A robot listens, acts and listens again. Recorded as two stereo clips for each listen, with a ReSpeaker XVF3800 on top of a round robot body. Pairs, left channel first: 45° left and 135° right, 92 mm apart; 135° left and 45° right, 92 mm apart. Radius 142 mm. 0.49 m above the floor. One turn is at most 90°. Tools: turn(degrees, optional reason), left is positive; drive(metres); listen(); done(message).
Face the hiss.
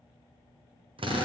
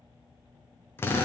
listen()
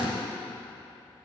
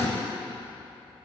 listen()
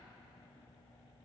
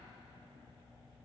done("I can't make out a hiss, only a drill.")